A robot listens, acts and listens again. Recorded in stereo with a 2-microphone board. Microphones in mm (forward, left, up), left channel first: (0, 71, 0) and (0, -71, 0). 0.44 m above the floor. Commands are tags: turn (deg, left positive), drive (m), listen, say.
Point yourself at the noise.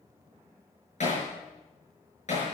<turn deg="55"/>
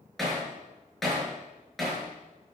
<say>Facing the hammering.</say>